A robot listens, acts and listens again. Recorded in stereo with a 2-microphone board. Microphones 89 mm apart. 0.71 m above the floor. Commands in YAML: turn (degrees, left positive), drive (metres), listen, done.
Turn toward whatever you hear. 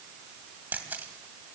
turn: -20
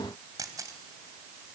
turn: -140
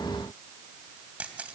turn: -15
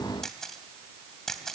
done: "Facing the camera shutter."